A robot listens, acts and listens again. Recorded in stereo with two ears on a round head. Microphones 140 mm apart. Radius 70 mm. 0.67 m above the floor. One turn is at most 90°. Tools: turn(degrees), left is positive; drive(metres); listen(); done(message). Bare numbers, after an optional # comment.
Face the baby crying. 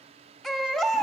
turn(30)
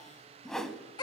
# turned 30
# So it is at 145° left.
turn(90)
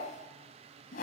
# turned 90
# Nothing new. It was at 55° left.
turn(55)
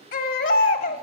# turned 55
# The baby crying is now 65° left.
turn(65)
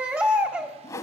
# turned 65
# The baby crying is now 10° right.
turn(-10)
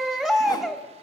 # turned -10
done("Facing the baby crying, 1 to 2 m away.")